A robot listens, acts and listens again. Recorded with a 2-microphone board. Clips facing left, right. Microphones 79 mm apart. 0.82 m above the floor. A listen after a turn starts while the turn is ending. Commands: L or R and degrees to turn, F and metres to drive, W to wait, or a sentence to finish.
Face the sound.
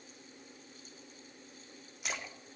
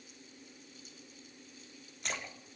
L30
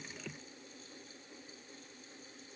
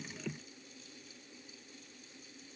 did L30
W
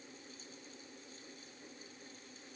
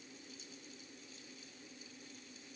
I heard a splash, but can't make it out now. It was about 25° right or 145° left.